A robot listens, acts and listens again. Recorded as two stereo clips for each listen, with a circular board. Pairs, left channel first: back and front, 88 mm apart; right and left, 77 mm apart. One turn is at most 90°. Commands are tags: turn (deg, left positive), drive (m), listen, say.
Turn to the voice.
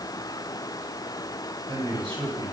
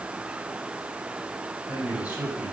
<turn deg="15"/>
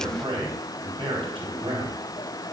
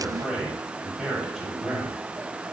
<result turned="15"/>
<say>Found it: a man speaking, straight ahead, over 4 m away.</say>